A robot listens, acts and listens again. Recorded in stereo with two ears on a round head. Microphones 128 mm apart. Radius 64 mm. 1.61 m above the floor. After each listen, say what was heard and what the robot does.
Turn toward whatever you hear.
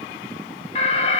The alarm: about 45° left or 135° left. Turn 45° left.
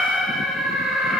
Facing the alarm.